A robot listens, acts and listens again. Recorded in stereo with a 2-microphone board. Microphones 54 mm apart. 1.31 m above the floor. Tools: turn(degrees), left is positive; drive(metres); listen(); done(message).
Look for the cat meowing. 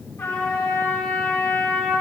listen()
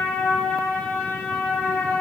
listen()
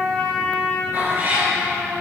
turn(degrees=-35)
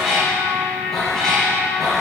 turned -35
done("Found it: a cat meowing, straight ahead.")